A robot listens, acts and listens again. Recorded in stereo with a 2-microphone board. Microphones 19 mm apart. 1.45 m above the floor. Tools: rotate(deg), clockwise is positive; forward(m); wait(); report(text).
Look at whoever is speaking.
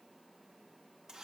wait()
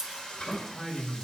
rotate(-15)
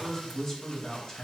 rotate(-150)
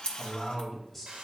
rotate(-10)
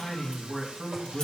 report("Facing the man speaking, 2 to 4 m away.")